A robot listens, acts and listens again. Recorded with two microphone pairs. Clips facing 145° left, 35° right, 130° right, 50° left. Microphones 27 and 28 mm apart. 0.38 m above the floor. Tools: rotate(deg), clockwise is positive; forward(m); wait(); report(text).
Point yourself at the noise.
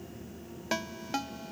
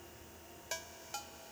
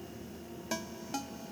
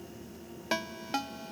rotate(-90)
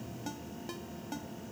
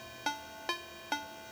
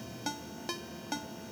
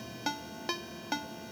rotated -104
rotate(10)
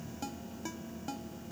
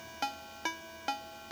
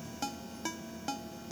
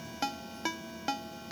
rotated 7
report("Facing the ringtone.")